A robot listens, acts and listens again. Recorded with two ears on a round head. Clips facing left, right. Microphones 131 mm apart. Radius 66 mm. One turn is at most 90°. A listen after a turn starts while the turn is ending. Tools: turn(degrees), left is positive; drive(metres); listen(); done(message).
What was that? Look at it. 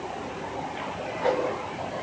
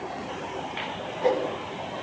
turn(degrees=-20)
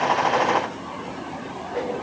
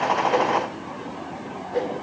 turn(degrees=-90)
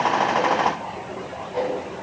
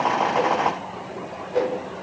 turn(degrees=-70)
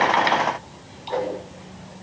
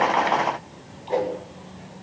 turn(degrees=-25)
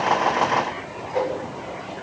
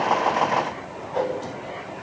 turn(degrees=10)
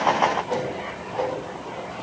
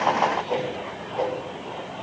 done("Facing the whoosh, over 4 m away.")